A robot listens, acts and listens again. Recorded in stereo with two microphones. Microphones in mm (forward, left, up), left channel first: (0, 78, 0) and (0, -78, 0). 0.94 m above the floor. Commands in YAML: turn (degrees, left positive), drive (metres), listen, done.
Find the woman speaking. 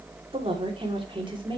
turn: -30
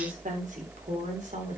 turn: -125
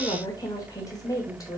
turn: 25
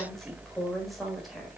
done: "Found it: a woman speaking, straight ahead."